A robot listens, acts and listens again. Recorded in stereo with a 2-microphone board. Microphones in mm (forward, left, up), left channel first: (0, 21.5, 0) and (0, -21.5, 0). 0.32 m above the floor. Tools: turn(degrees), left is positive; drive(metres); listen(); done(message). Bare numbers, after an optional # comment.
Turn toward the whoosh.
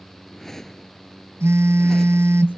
turn(30)
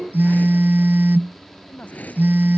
# So it is at 145° left.
turn(145)
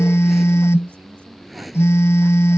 done("Found it: a whoosh, straight ahead.")